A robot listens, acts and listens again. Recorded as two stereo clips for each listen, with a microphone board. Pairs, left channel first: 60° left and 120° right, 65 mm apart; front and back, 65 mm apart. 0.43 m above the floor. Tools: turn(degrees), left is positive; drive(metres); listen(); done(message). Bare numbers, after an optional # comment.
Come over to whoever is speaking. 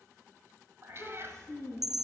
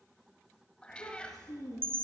# The child speaking: 15° right.
turn(-15)
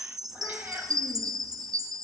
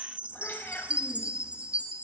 listen()
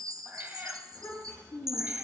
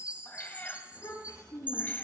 drive(1.0)
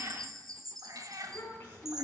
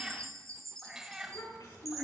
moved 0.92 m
drive(1.0)
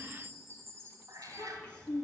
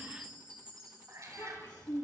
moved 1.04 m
# The child speaking is now 10° right.
turn(-10)
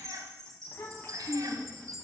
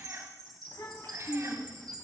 drive(1.0)
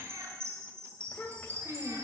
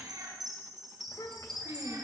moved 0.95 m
drive(1.0)
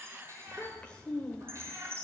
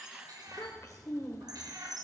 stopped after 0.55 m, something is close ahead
# The child speaking is now 10° right.
turn(-10)
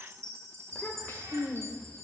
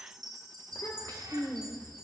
done("Arrived at the child speaking, straight ahead.")